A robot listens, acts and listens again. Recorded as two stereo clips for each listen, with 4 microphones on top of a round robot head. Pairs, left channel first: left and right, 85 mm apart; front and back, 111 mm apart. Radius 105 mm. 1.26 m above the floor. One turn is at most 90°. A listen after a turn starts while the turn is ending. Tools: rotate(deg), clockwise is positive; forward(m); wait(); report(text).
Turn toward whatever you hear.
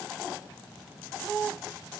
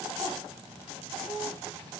wait()
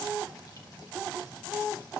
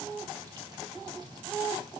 wait()
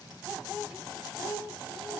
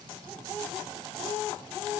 report("I can't make out anything.")